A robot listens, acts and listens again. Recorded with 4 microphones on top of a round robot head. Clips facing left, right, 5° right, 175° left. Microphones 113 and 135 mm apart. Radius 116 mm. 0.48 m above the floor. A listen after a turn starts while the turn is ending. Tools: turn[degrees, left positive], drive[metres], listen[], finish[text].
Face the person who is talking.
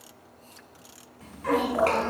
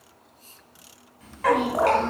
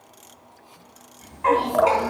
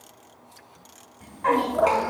Thought: The child speaking: 140° left.
Action: turn[140]
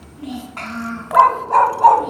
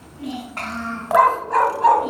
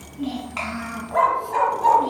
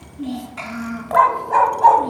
Action: finish[Found it: a child speaking, straight ahead, over 4 m away.]